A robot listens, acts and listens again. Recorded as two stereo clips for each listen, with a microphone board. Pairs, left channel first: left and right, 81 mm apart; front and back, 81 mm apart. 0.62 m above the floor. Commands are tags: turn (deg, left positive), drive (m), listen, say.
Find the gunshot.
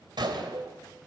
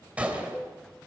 <turn deg="-110"/>
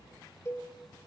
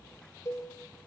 <say>Facing where the gunshot came from. I can't hear it now.</say>